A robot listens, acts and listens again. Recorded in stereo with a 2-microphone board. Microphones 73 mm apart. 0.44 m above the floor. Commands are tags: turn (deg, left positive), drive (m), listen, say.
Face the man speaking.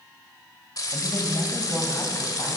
<turn deg="35"/>
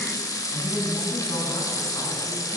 <turn deg="105"/>
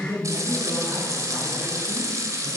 <turn deg="-35"/>
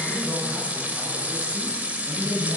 <say>Found it: a man speaking, straight ahead, over 4 m away.</say>